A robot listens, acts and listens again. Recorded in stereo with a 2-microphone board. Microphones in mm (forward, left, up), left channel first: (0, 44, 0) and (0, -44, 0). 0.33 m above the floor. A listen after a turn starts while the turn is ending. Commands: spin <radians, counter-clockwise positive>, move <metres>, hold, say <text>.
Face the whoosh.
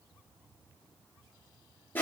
hold
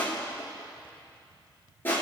hold
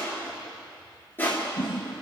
spin 0.52
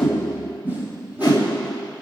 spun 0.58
spin -0.44
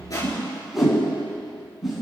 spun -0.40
say Found it: a whoosh, straight ahead, 2 to 4 m away.